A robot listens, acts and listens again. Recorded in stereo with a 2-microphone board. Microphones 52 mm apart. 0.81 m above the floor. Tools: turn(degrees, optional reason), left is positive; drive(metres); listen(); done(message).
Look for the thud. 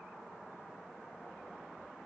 listen()
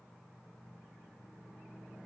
listen()
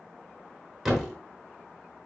turn(degrees=-30)
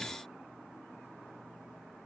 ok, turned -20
listen()
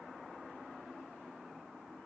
done("I heard a thud, but can't make it out now. It was about 15° left or 155° right.")